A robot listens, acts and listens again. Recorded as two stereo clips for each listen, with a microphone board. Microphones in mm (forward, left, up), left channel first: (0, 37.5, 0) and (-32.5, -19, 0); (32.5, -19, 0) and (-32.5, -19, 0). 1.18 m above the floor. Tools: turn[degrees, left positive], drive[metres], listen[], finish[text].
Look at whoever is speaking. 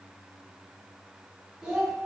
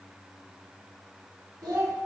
Thought: The child speaking: 160° left.
Action: turn[160]
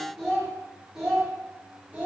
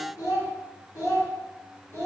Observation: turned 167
Thought: The child speaking is now 50° right.
Action: turn[-50]
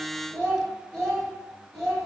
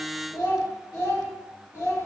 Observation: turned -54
Thought: The child speaking is now 25° right.
Action: turn[-25]
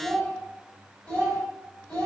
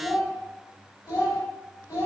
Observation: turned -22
Action: finish[Facing the child speaking, 1 to 2 m away.]